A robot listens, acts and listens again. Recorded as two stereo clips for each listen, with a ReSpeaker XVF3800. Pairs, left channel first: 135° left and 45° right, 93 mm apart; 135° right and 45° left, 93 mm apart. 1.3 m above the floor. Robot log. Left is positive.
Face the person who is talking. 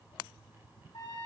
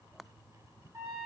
cmd idle
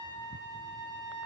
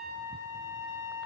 cmd idle
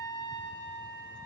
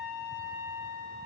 end: I can't make out anyone speaking, only a trumpet.